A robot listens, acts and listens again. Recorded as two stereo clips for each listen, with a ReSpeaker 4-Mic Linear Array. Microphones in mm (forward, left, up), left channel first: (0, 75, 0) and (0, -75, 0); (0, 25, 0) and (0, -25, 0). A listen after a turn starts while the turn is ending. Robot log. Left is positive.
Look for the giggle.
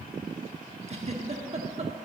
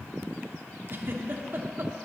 note: The giggle: about 45° right or 135° right.
cmd yaw -45
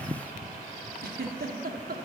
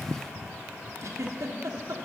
note: So it is at 90° right.
cmd yaw -90
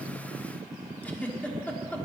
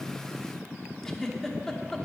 note: The giggle is now 10° left.
cmd yaw +10
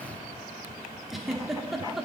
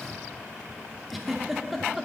end: Facing the giggle, 1 to 2 m away.